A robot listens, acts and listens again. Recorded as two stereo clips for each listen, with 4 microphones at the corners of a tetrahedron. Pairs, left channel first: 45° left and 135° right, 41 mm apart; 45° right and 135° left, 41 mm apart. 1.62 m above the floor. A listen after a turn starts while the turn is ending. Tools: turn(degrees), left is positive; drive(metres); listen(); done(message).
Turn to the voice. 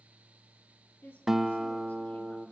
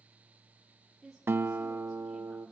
turn(degrees=45)
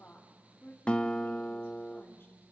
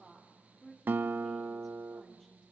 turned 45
turn(degrees=20)
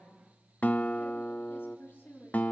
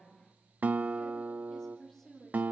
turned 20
turn(degrees=20)
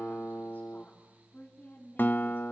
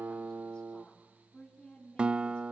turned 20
done("Found it: a woman speaking, straight ahead, over 4 m away.")